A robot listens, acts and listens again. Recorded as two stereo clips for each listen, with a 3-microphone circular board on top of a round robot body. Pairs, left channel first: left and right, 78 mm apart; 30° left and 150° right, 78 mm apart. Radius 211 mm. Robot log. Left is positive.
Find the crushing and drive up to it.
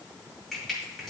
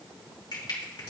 cmd fwd 1.0
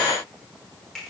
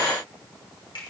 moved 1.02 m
cmd fwd 1.0
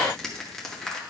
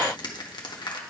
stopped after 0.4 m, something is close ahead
end: Arrived at the crushing, straight ahead.